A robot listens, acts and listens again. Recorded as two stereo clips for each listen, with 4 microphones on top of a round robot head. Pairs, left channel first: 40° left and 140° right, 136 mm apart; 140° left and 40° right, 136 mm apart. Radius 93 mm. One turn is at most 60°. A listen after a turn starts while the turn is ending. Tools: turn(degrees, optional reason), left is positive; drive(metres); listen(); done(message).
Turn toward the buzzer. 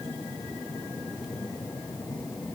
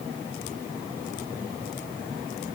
listen()
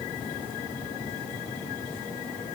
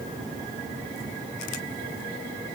listen()
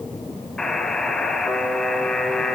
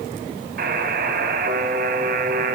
turn(degrees=-45, reason="The buzzer: 45° right.")
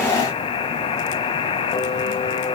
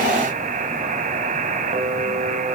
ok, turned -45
turn(degrees=-10, reason="The buzzer is now 10° right.")
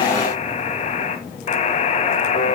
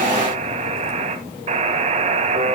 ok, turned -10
done("Found it: a buzzer, straight ahead, 1 to 2 m away.")